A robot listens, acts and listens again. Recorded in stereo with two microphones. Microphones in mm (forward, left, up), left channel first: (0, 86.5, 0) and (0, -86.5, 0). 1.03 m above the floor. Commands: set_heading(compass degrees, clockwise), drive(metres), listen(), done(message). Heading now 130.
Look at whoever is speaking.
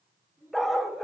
set_heading(145)
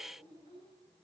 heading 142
set_heading(292)
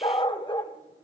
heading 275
set_heading(295)
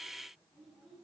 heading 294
done("Found it: a child speaking, straight ahead, over 4 m away.")